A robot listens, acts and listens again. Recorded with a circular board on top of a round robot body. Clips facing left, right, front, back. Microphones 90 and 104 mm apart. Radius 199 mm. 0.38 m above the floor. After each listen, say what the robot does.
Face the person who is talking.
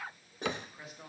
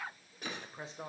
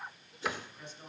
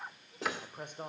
Turn 145° right.
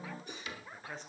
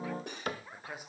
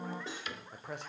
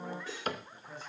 Turn 10° right.
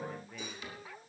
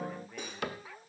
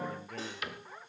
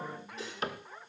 Keep listening.
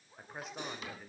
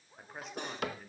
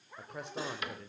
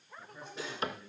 Facing the man speaking, 2 to 4 m away.